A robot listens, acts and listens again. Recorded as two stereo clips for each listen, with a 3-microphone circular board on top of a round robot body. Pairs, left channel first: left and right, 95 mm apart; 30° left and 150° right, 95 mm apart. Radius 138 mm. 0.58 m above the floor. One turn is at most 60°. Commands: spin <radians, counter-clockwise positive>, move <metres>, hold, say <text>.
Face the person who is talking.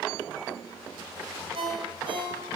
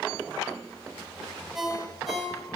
hold
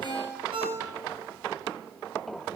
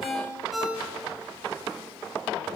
hold
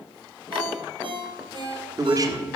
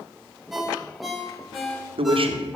spin -1.05
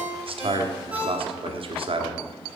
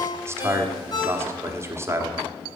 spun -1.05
spin -1.05
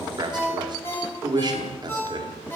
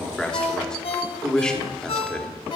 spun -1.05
spin -0.96
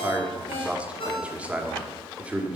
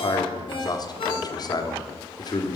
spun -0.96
spin -0.26
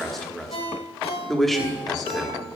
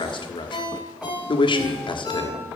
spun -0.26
say Facing the man speaking, 1 to 2 m away.